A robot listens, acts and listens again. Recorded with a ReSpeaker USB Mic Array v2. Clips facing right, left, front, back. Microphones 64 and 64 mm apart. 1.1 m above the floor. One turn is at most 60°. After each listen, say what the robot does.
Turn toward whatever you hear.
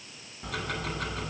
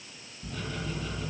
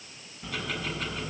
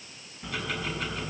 Turn 60° right.
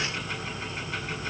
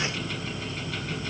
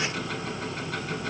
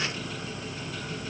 Turn 20° right.
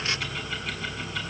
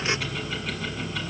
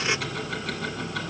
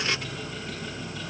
Facing the ticking, over 4 m away.